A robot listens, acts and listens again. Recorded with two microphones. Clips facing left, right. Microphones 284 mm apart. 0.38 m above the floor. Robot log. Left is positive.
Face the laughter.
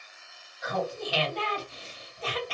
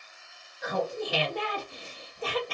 note: The laughter: about 55° right or 125° right.
cmd yaw -55
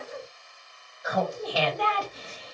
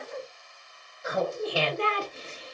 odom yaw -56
note: So it is at 35° right.
cmd yaw -35
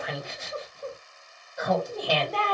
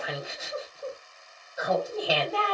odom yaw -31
end: Facing the laughter, 1 to 2 m away.